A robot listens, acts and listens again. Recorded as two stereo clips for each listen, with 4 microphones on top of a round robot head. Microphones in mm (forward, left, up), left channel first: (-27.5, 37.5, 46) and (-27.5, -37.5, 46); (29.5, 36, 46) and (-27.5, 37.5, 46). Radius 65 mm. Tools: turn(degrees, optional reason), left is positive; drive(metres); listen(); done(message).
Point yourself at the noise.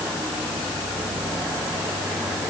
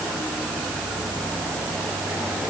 listen()
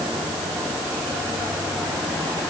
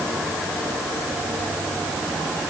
listen()
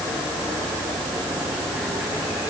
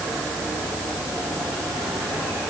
done("I can't make out anything to turn to.")